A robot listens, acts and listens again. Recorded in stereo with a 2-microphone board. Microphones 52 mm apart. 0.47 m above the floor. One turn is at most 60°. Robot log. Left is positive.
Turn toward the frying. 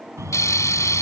cmd yaw +60
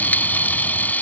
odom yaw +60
note: So it is at 35° left.
cmd yaw +35
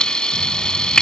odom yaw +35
note: The frying is now 15° left.
cmd yaw +15
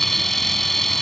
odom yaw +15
end: Found it: frying, straight ahead.